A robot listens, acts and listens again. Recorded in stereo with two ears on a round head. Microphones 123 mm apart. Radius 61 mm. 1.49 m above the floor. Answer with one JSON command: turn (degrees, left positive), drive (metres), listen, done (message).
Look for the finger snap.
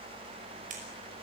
{"turn": -60}
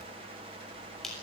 {"done": "Found it: a finger snap, straight ahead."}